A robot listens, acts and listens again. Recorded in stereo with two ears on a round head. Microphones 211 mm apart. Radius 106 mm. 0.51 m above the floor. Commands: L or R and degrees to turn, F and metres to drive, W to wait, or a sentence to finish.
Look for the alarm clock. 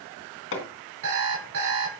R65
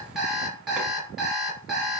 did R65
Found it: an alarm clock, straight ahead, 2 to 4 m away.